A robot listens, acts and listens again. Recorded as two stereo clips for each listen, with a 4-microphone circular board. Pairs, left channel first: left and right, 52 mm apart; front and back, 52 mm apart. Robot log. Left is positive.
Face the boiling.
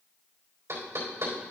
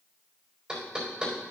cmd idle
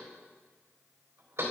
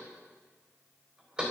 cmd idle
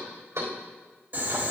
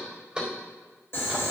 note: The boiling: 40° right.
cmd yaw -40
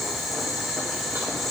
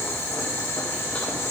end: Facing the boiling.